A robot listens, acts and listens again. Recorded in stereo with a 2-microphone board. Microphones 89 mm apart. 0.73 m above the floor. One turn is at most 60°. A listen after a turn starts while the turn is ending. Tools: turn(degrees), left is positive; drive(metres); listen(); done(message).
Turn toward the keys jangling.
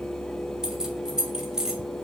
turn(degrees=-30)
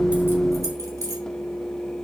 listen()
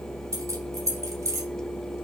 turn(degrees=-60)
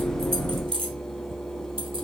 turn(degrees=-60)
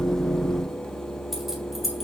done("Found it: keys jangling, straight ahead.")